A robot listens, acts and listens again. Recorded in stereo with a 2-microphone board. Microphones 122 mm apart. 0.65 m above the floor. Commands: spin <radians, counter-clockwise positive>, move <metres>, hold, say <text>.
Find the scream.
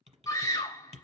spin 0.52
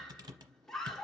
say Found it: a scream, straight ahead.